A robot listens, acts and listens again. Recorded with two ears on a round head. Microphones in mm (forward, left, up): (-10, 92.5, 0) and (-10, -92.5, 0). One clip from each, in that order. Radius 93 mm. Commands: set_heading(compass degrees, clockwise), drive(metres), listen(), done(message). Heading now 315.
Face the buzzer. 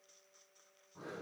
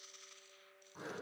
listen()
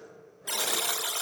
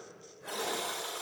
set_heading(250)
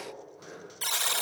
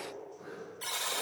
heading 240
set_heading(205)
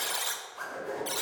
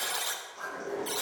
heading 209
done("Found it: a buzzer, straight ahead, 1 to 2 m away.")